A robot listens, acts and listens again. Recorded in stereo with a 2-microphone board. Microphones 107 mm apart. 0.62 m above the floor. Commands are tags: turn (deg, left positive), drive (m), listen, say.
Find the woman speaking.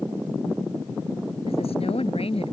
<turn deg="65"/>
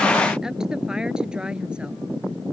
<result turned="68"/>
<turn deg="-10"/>
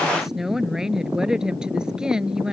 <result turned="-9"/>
<say>Found it: a woman speaking, straight ahead.</say>